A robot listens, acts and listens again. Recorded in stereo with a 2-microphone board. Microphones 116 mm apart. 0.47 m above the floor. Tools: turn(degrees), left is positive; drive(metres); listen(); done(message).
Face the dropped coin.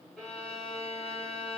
listen()
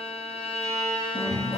turn(degrees=65)
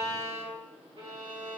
listen()
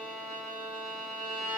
done("I heard a dropped coin, but can't make it out now. It was about straight ahead or 50° left.")